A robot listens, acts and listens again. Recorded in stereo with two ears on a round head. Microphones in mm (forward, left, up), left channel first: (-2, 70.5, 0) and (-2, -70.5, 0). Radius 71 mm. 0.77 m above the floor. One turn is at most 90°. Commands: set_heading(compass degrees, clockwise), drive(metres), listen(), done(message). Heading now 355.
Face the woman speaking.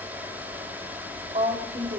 set_heading(30)
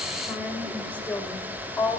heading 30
set_heading(15)
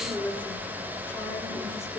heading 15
set_heading(0)
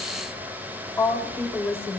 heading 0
set_heading(345)
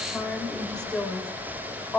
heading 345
done("Found it: a woman speaking, straight ahead.")